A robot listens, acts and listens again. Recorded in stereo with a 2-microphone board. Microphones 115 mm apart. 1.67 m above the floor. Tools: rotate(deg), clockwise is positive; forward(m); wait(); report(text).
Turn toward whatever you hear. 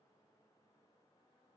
wait()
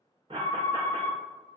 rotate(50)
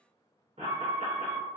rotate(80)
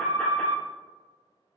rotate(-10)
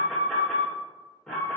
report("Found it: an alarm, straight ahead, under 1 m away.")